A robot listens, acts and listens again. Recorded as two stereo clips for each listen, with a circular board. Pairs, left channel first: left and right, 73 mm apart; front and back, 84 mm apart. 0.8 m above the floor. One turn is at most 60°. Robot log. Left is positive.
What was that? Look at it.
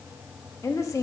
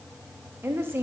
note: The woman speaking: 120° left.
cmd yaw +60
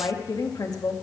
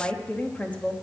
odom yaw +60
note: The woman speaking is now 70° left.
cmd yaw +60
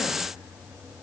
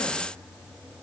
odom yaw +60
note: Nothing new. It was at 10° left.
cmd yaw +10
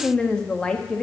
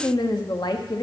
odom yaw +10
note: The woman speaking is now 15° left.
cmd yaw +15
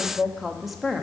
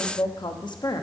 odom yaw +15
end: Found it: a woman speaking, straight ahead.